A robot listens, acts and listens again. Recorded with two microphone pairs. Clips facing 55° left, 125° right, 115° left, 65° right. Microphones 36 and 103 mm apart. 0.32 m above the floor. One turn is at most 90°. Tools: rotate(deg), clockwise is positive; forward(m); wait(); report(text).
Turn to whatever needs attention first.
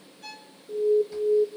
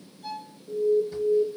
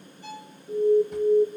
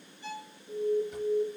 rotate(90)
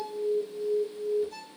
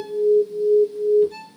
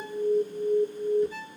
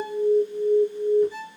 rotate(40)
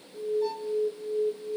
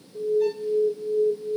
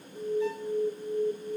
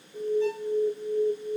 rotate(10)
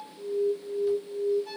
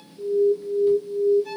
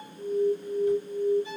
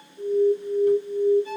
report("Found it: an alarm, straight ahead.")